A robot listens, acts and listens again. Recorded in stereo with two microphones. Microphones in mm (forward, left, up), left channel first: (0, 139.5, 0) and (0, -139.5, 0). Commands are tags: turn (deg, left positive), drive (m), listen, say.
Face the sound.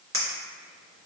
<turn deg="-45"/>
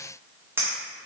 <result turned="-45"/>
<turn deg="-10"/>
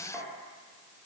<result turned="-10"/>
<listen/>
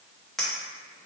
<say>Found it: a clink, straight ahead, under 1 m away.</say>